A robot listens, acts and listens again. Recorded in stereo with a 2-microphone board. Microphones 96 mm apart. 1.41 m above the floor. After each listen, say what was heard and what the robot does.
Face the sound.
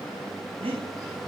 Turn 90° right.
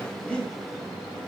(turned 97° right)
So it is at 10° left. Turn 10° left.
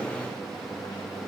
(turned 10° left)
Keep listening.
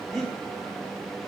Found it: breathing, straight ahead.